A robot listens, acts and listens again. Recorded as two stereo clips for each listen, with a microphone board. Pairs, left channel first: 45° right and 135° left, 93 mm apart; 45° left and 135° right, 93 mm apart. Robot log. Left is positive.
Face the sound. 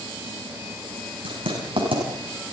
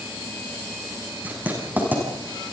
note: The writing: 155° left.
cmd yaw +155
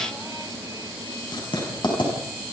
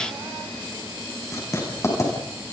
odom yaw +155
note: The writing is now 10° right.
cmd yaw -10
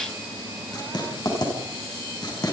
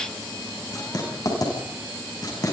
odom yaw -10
end: Facing the writing.